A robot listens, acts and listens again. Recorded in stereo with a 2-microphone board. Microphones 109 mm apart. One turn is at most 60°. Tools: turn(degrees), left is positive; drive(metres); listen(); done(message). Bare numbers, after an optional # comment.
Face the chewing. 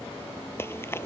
# The chewing: about 20° left or 160° left.
turn(20)
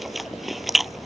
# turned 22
done("Found it: chewing, straight ahead.")